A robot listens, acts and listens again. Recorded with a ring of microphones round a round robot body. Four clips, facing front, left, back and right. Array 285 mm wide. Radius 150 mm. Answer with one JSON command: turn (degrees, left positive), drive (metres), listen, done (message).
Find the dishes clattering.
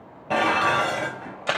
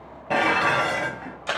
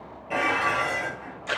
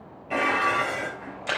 {"turn": 55}
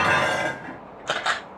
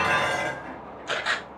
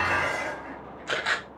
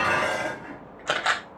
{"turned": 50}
{"done": "Facing the dishes clattering, 2 to 4 m away."}